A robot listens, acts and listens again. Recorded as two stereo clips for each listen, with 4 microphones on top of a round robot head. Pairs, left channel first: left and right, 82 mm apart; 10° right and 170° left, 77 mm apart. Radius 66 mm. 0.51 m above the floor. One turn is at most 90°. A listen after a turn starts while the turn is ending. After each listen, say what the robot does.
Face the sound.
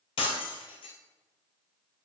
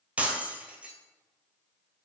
Turn 90° left.
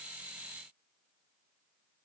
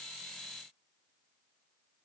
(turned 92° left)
Turn 10° left.
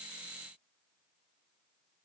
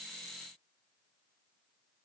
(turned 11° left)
Facing where the breaking glass came from. I can't hear it now.